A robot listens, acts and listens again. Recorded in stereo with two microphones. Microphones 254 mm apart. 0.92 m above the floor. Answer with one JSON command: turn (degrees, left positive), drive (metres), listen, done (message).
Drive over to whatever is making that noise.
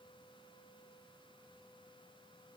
{"listen": true}
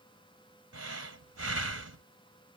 {"turn": -65}
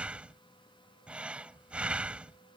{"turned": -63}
{"drive": 1.0}
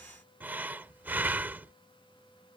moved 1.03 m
{"drive": 1.0}
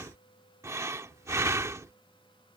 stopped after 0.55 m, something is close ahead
{"turn": -10}
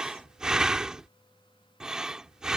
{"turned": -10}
{"done": "Arrived at the breathing, straight ahead."}